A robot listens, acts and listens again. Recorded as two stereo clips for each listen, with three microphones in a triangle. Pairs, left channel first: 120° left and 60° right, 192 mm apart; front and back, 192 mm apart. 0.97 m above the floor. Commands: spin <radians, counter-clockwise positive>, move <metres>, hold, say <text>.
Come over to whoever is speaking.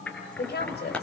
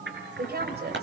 spin 2.62
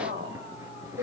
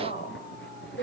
spin -0.70
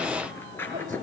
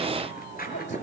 hold
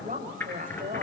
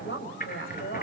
spin -0.26
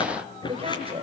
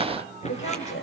move 1.0
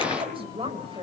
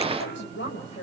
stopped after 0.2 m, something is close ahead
say Blocked. The woman speaking is further on, straight ahead.